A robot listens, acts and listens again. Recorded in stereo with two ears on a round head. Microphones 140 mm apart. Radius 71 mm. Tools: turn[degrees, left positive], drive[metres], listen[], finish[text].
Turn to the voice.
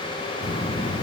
Thought: The child speaking: about 45° left or 135° left.
Action: turn[45]
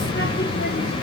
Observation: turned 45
Thought: So it is at 90° left.
Action: turn[90]
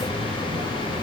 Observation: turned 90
Action: finish[Found it: a child speaking, straight ahead.]